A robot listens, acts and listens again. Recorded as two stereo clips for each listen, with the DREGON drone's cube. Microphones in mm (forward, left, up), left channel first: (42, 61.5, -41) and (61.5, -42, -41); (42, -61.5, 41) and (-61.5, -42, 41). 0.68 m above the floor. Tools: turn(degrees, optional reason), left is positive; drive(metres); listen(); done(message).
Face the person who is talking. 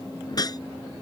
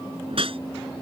listen()
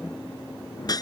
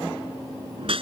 listen()
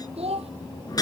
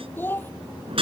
turn(degrees=-80, reason="The child speaking: 80° right.")
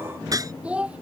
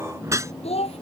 done("Found it: a child speaking, straight ahead.")